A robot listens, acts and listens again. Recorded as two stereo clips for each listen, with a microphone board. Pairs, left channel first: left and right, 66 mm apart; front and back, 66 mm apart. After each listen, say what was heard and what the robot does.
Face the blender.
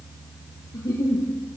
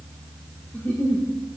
Keep listening.
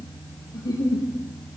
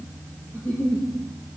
Keep listening.
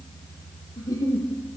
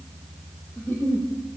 I can't make out a blender, only a giggle.